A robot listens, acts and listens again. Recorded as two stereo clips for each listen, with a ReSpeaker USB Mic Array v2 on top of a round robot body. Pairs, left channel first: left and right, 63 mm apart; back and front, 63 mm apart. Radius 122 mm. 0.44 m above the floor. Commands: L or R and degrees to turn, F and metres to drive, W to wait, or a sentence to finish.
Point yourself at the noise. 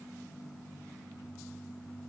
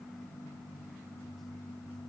W
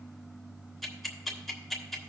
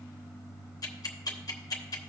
L175
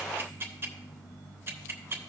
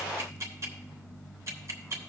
R40
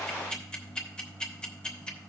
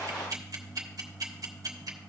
L15
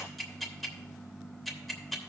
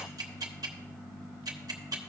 Facing the ticking, 1 to 2 m away.